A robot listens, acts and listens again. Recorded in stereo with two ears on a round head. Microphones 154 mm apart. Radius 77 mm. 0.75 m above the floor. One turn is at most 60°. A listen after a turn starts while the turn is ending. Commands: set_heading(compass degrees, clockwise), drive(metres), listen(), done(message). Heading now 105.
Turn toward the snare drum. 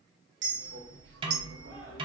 set_heading(130)
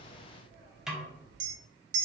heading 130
done("Found it: a snare drum, straight ahead.")